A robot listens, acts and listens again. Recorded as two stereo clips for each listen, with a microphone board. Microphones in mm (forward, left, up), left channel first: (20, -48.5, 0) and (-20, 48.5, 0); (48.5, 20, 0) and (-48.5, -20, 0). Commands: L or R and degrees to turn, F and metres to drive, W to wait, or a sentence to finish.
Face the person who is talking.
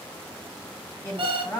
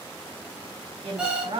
R130
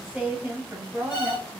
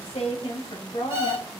L50
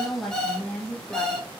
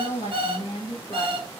L25
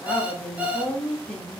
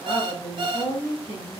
L10
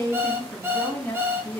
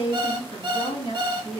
Found it: a woman speaking, straight ahead, 2 to 4 m away.